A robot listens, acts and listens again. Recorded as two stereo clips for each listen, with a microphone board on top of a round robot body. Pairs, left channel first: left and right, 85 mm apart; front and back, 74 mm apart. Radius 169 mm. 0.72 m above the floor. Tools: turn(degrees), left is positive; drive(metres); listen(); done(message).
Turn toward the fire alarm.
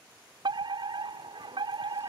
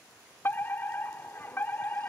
turn(degrees=-60)
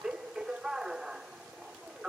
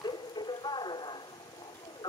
done("Facing the fire alarm.")